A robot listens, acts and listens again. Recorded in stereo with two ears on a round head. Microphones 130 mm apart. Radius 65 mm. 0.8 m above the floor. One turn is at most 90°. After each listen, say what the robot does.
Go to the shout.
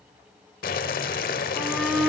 Turn 30° left.
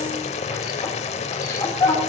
Turn 90° left.
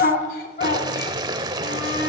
Turn 70° left.
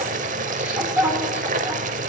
Turn 15° right.
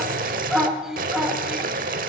Drive 1.0 m forward.
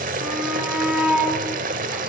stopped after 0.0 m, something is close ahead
Turn 10° right.
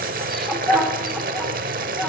Blocked. The shout is further on, straight ahead.